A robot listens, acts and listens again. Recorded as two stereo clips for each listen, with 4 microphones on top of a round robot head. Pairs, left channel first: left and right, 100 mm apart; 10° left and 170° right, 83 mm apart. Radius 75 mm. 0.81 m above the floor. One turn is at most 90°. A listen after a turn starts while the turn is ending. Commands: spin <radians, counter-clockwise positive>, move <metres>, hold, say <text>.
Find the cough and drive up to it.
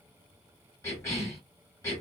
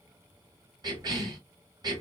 spin 1.57
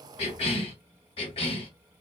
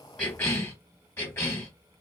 spin 1.22
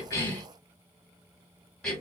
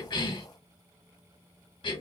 move 1.0
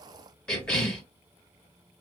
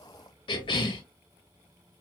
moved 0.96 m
spin 0.17
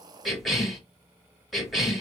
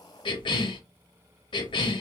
move 1.0
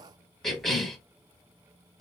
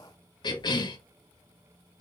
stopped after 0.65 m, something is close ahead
say I am next to the cough.